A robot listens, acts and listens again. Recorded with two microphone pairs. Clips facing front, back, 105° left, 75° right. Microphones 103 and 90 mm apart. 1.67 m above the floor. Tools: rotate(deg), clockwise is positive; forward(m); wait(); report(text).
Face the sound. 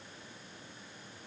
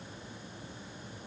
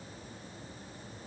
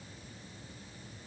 wait()
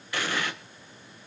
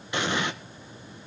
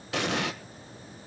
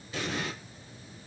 rotate(-110)
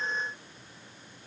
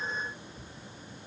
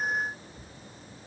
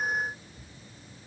report("I heard an explosion from this way, but can't make it out now.")